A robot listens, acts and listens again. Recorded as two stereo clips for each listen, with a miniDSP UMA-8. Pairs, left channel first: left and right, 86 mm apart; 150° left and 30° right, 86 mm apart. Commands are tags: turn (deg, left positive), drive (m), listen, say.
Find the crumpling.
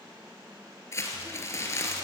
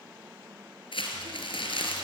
<turn deg="145"/>
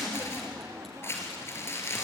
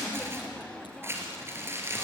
<turn deg="30"/>
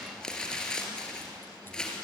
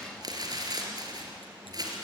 <turn deg="10"/>
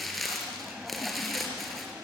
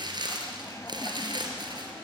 <say>Found it: crumpling, straight ahead.</say>